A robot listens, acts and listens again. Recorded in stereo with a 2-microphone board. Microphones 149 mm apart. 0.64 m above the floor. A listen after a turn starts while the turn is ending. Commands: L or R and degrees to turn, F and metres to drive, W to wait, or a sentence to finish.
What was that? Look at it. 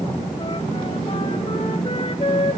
L40
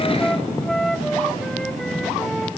Facing the flute, 1 to 2 m away.